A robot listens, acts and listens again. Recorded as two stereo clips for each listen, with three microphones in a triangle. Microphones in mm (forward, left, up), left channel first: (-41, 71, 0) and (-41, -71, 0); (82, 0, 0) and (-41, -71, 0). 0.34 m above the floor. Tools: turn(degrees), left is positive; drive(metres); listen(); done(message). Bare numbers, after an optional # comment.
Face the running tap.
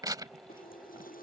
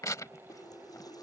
# The running tap: 95° left.
turn(95)
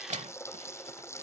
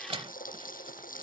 # The running tap is now 20° left.
turn(20)
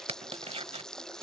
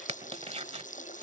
done("Facing the running tap.")